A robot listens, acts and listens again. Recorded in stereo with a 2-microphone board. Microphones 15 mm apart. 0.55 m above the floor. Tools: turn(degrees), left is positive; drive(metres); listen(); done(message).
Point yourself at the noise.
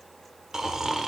turn(degrees=-35)
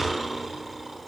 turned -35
done("Facing the snoring, 1 to 2 m away.")